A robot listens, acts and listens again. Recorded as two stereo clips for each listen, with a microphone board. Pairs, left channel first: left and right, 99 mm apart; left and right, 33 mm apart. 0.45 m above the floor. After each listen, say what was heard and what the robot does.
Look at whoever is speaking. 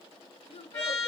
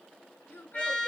Turn 90° left.
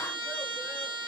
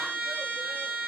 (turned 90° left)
Keep listening.
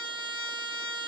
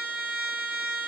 Keep listening.
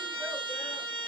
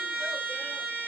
Facing where the child speaking came from. I can't hear it now.